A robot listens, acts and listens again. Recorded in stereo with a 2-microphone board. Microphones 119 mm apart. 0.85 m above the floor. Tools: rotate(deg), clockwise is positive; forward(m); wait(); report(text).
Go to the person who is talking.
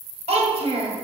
rotate(60)
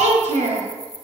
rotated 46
rotate(75)
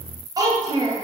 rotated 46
rotate(30)
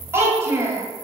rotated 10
rotate(20)
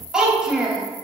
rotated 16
forward(1.0)
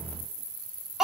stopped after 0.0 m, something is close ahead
report("Blocked. The child speaking is further on, straight ahead.")